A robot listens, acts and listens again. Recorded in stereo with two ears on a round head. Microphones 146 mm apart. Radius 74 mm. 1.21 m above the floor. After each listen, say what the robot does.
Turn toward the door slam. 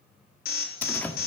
Turn 30° left.
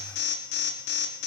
Keep listening.
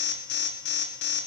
I heard a door slam, but can't make it out now. It was about 20° right or 140° left.